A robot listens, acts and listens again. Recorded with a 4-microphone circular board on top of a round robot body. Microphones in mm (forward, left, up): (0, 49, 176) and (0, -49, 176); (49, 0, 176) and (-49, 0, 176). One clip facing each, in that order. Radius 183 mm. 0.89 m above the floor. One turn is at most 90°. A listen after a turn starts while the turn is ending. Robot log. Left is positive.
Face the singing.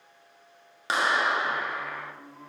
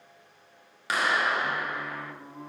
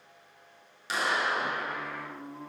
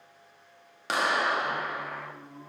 note: The singing: 15° right.
cmd yaw -15
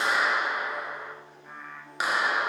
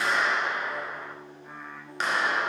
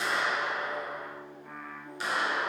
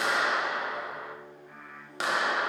end: Found it: singing, straight ahead.